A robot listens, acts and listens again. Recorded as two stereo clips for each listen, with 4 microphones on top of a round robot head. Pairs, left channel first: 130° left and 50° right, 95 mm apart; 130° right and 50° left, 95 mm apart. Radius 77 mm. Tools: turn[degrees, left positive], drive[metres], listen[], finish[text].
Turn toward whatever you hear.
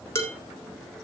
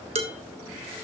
Thought: The dishes clattering: 65° left.
Action: turn[65]
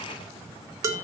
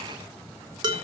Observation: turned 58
Action: finish[Facing the dishes clattering.]